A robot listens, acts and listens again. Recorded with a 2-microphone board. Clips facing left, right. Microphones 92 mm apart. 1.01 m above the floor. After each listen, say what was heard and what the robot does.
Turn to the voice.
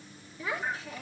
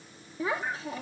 The child speaking: about 30° right or 150° right. Turn 30° right.
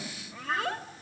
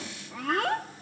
So it is at 120° right. Turn 120° right.
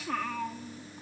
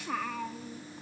Found it: a child speaking, straight ahead, 1 to 2 m away.